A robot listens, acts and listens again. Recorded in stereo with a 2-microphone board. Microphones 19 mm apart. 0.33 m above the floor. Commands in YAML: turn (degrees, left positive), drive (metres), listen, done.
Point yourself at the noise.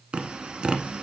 turn: -65
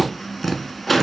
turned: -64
done: "Found it: tapping, straight ahead, 1 to 2 m away."